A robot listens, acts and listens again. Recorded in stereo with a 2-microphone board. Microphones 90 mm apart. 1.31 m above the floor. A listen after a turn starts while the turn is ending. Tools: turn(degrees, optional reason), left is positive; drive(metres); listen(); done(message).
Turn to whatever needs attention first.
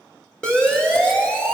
turn(degrees=30)
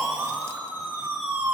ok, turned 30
turn(degrees=-20, reason="So it is at 20° right.")
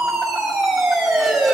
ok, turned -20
done("Facing the siren.")